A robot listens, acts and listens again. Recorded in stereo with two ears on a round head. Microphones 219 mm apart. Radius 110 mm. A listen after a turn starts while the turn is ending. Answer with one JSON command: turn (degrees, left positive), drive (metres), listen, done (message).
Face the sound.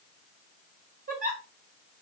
{"turn": -35}
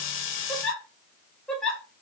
{"done": "Facing the giggle, 2 to 4 m away."}